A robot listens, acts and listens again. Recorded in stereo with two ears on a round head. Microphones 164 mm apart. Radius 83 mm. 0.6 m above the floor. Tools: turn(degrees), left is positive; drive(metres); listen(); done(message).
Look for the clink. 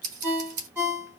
listen()
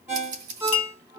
turn(degrees=40)
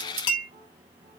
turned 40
turn(degrees=100)
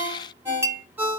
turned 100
turn(degrees=-15)
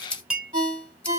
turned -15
done("Facing the clink.")